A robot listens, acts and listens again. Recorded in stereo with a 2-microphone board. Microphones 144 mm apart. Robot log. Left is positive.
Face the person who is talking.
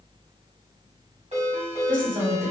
cmd yaw -90
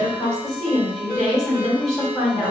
end: Found it: a woman speaking, straight ahead, 1 to 2 m away.